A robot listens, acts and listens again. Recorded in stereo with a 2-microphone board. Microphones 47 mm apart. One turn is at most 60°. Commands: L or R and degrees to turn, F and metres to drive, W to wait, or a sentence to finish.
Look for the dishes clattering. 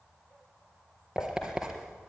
L60
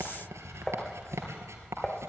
L15
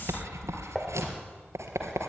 Facing the dishes clattering, 2 to 4 m away.